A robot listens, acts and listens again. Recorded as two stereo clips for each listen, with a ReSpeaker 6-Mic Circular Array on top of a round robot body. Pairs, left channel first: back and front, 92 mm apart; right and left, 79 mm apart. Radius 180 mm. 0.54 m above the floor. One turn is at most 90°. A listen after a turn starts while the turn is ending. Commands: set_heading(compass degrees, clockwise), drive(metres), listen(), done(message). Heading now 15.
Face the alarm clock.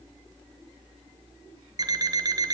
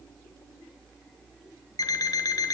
set_heading(65)
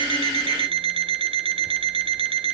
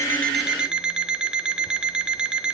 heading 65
set_heading(55)
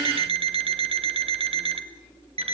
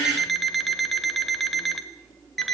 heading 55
done("Facing the alarm clock.")